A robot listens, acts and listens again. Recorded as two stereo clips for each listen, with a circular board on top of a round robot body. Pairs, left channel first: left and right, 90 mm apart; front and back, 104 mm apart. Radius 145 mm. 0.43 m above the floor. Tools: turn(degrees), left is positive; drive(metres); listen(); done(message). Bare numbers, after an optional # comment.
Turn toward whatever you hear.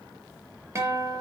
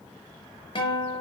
# The guitar: 30° right.
turn(-30)
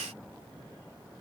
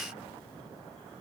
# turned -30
listen()
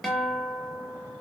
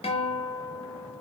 done("Facing the guitar.")